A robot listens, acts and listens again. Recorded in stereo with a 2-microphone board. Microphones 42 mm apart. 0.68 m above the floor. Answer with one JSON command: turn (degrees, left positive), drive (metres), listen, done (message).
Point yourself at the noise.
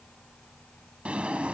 {"turn": -30}
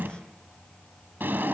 {"turn": -120}
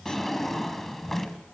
{"done": "Facing the drawer, 1 to 2 m away."}